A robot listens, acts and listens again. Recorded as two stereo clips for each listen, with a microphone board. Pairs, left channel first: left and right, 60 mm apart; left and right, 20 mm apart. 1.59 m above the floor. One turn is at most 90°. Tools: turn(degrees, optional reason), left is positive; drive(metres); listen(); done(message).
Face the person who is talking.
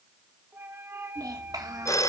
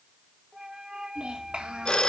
turn(degrees=-90)
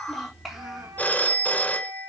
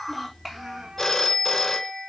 done("Found it: a child speaking, straight ahead, over 4 m away.")